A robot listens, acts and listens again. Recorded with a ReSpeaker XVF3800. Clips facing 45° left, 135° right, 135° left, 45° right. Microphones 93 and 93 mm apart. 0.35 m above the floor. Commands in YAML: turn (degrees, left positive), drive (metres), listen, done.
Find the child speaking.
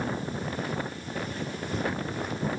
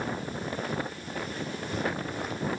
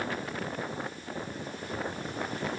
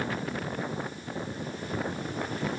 listen: true
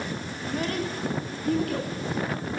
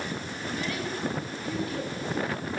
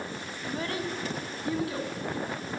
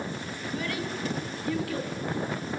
turn: 70
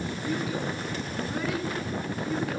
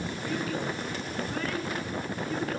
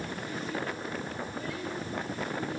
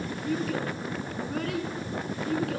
turn: -40
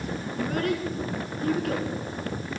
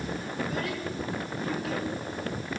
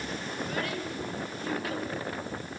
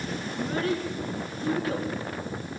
turn: 10
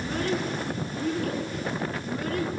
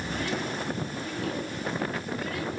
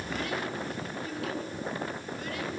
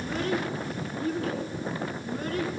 done: "Facing the child speaking."